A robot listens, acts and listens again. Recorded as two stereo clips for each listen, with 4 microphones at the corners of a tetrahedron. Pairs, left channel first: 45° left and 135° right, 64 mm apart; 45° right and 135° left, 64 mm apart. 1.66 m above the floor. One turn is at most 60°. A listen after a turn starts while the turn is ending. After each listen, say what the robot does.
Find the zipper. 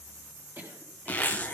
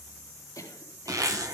Turn 60° left.
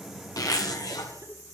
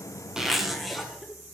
Turn 45° left.
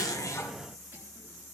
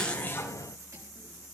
Keep listening.
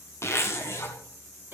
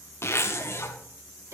Facing the zipper.